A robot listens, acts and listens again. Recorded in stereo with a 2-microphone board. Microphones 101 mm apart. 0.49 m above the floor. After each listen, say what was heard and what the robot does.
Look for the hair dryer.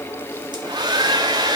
The hair dryer: about 45° right or 135° right. Turn 45° right.
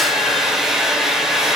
Facing the hair dryer, 1 to 2 m away.